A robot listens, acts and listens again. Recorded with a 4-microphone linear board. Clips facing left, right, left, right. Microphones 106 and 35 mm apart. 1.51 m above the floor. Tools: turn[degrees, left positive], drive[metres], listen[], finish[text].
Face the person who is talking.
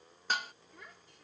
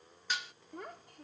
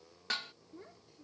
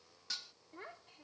Thought: The child speaking: about 50° right or 130° right.
Action: turn[-50]
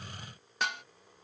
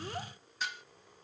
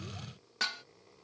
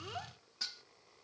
Action: listen[]
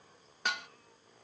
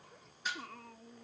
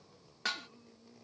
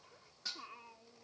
Thought: So it is at 80° right.
Action: turn[-80]
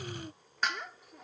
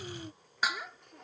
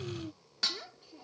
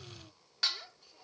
Action: finish[Found it: a child speaking, straight ahead.]